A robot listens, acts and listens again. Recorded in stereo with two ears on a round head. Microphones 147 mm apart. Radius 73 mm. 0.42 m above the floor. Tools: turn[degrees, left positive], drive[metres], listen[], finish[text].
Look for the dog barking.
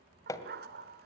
Thought: The dog barking: about 65° right or 115° right.
Action: turn[-65]
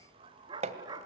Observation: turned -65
Thought: So it is at 25° right.
Action: turn[-25]
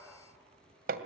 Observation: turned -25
Action: finish[Found it: a dog barking, straight ahead, 2 to 4 m away.]